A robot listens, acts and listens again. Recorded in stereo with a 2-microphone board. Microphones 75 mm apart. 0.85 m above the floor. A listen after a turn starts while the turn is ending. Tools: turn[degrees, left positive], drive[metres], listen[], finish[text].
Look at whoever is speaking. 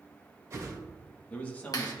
Thought: The man speaking: about 20° left or 160° left.
Action: turn[20]
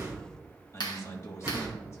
Thought: So it is at 135° left.
Action: turn[135]
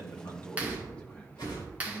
Thought: The man speaking is now 15° left.
Action: turn[15]
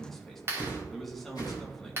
Action: finish[Found it: a man speaking, straight ahead.]